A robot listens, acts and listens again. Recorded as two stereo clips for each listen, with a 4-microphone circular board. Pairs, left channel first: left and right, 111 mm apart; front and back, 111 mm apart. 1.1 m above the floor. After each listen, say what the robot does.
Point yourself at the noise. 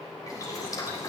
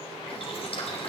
Turn 30° left.
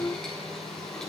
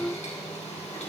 Found it: boiling, straight ahead, 2 to 4 m away.